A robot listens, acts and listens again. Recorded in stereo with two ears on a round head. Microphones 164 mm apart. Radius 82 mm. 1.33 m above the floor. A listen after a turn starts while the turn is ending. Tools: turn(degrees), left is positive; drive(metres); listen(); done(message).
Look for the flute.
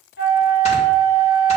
turn(degrees=60)
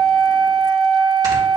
turn(degrees=60)
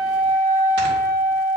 turn(degrees=20)
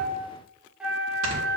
done("Facing the flute, 1 to 2 m away.")